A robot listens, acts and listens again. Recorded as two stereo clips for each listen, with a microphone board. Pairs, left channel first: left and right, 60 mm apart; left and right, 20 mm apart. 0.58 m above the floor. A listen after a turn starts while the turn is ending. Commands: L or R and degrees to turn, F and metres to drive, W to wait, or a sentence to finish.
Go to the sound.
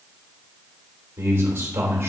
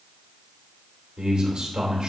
R45
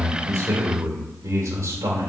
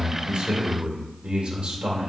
R85
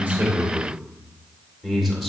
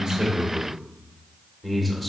F1.0
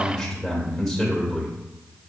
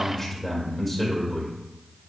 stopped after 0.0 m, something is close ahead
Blocked. The man speaking is further on, straight ahead.